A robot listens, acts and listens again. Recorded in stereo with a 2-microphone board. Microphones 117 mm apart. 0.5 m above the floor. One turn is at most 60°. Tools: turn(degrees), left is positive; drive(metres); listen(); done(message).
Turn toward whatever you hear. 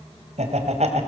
turn(degrees=-60)
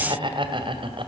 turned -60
turn(degrees=-50)
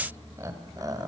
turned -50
turn(degrees=-30)
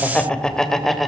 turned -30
done("Found it: laughter, straight ahead.")